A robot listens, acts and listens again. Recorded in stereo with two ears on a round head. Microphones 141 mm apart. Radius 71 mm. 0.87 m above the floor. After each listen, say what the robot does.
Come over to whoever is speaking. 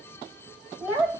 Turn 30° right.
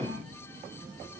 Keep listening.
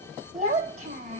Turn 135° right.
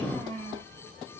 Turn 15° left.
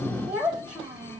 Drive 1.0 m forward.
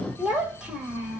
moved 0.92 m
Drive 1.0 m forward.
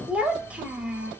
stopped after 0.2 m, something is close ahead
Turn 10° right.
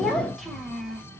I am next to the child speaking.